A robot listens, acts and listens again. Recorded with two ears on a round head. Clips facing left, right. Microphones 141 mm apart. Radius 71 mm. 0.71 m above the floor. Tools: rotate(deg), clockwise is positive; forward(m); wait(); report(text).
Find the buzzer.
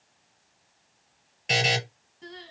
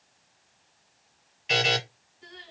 rotate(-55)
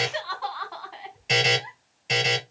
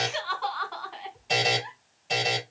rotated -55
rotate(-70)
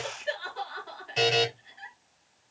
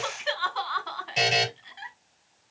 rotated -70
rotate(15)
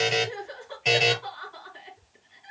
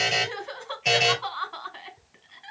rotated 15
report("Found it: a buzzer, straight ahead.")